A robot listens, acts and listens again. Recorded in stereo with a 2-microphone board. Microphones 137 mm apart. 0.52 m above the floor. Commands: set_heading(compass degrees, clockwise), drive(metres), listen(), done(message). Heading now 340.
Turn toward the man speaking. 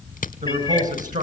set_heading(50)
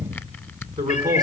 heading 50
set_heading(75)
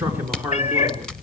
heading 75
set_heading(90)
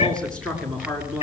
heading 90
set_heading(80)
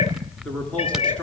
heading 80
listen()
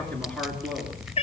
listen()
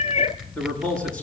done("Facing the man speaking, over 4 m away.")